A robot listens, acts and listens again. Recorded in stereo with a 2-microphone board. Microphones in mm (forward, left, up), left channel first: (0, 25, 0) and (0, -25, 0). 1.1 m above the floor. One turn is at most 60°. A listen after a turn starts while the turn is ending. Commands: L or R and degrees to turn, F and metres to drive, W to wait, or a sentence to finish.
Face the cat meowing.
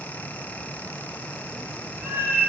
R45
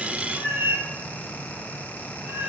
R60
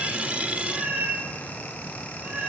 R25
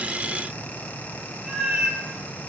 R10
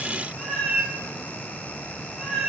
Facing the cat meowing.